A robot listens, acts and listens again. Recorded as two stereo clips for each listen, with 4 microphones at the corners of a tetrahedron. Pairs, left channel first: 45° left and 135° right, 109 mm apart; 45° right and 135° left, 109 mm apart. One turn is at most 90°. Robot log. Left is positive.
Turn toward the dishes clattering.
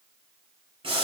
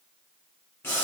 cmd idle
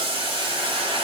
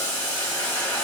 cmd idle
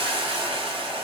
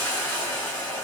end: I can't make out dishes clattering to turn to.